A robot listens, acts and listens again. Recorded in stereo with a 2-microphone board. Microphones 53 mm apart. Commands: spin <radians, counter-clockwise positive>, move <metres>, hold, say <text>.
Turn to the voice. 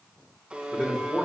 spin 0.52
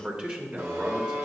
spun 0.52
spin -0.35
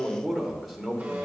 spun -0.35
say Facing the man speaking, 1 to 2 m away.